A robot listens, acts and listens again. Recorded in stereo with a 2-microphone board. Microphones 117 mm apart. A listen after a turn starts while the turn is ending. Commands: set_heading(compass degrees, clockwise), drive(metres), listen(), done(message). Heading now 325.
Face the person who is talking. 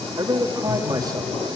set_heading(0)
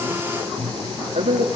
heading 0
set_heading(115)
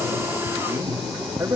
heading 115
set_heading(140)
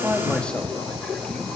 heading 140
listen()
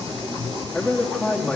set_heading(130)
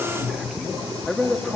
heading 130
done("Facing the man speaking.")